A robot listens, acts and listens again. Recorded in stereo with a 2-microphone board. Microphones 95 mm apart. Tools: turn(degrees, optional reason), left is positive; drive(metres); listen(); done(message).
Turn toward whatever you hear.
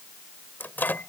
turn(degrees=20, reason="The microwave: about 20° left or 160° left.")
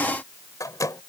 turn(degrees=135, reason="So it is at 135° left.")
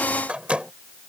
turn(degrees=-15, reason="The microwave is now 15° right.")
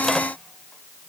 listen()
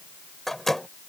done("Facing the microwave.")